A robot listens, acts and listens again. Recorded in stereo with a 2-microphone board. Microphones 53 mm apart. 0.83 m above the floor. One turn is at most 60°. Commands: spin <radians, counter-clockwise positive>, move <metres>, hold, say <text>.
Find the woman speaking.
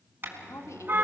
spin 1.05
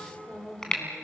spin 0.52
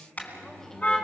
hold
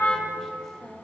hold
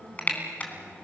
spin 0.17
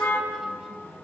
hold
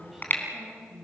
say Facing the woman speaking.